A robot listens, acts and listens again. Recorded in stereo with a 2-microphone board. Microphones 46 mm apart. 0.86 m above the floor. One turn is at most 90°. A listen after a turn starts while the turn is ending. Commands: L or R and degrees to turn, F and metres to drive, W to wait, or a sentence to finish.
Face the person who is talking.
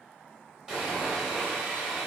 W
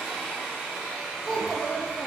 L30
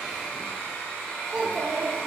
R30
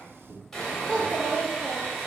R20
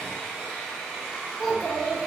Found it: a child speaking, straight ahead.